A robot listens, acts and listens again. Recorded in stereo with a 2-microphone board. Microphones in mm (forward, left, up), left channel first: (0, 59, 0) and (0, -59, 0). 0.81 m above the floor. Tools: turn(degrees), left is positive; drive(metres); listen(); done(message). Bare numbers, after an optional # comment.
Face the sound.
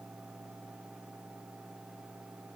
listen()
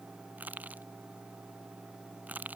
turn(-30)
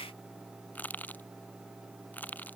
# So it is at 15° left.
turn(15)
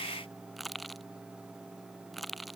done("Found it: crushing, straight ahead.")